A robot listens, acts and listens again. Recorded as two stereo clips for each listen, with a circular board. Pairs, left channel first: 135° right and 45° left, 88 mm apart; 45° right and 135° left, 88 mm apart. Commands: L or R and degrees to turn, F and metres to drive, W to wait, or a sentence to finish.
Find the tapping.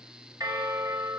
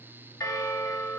W
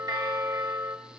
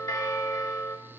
W
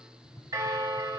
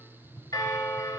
R90
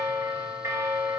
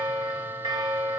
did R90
W
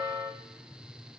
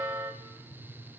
L10
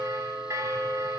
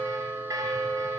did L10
W
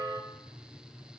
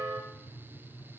Facing the tapping.